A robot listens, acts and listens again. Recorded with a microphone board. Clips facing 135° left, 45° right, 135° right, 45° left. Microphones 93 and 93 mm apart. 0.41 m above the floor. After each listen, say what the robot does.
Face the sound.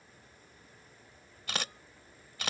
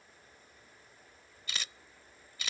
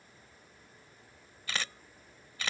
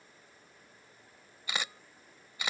Turn 120° left.
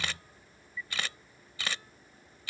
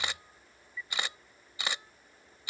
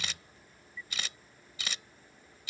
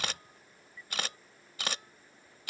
Turn 25° left.
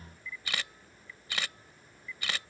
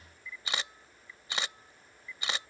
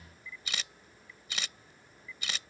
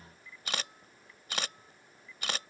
Turn 20° left.
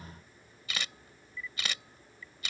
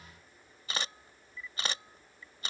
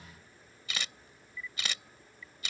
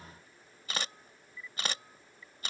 Facing the camera shutter.